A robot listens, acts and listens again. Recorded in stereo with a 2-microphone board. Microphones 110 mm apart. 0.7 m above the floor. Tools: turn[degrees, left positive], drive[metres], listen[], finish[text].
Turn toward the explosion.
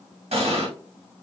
Thought: The explosion: about 65° right or 115° right.
Action: turn[-65]
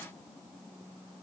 Action: listen[]
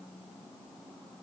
Action: finish[I heard an explosion, but can't make it out now. It was about straight ahead or 50° right.]